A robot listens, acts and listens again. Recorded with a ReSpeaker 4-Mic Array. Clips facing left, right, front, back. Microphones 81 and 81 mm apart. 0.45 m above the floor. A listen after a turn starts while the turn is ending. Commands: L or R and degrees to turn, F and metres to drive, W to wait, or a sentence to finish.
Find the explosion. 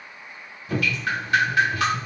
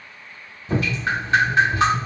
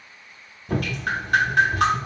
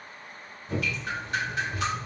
W
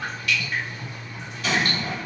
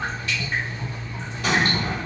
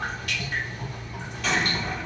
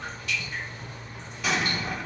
R95
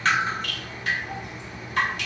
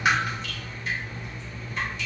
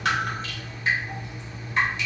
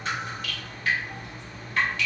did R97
Facing where the explosion came from. I can't hear it now.